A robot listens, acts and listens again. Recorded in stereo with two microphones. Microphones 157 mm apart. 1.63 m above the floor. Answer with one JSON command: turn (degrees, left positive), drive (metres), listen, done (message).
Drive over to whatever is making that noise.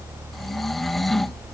{"turn": 30}
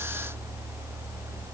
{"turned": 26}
{"listen": true}
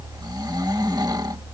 {"turn": -25}
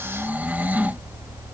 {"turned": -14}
{"turn": -10}
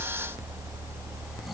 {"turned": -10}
{"listen": true}
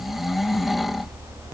{"drive": 1.0}
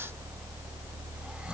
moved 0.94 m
{"listen": true}
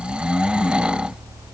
{"drive": 1.0}
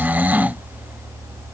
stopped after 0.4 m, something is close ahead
{"turn": -10}
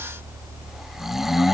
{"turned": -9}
{"done": "I am next to the snoring."}